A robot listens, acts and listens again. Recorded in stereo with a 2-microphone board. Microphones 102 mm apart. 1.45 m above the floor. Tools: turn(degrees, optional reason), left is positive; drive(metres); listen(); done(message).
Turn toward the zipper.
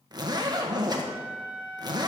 turn(degrees=-45, reason="The zipper: about 45° right or 135° right.")
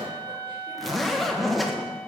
done("Facing the zipper, 1 to 2 m away.")